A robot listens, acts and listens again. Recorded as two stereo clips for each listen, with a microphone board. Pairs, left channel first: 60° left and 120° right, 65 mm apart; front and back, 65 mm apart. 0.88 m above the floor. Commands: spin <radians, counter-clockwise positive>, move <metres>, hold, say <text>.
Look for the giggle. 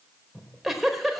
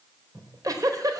spin 2.62
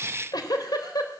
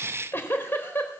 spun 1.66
spin 0.96
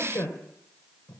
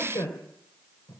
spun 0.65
spin 0.35
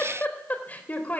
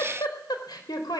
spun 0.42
say Facing the giggle, 2 to 4 m away.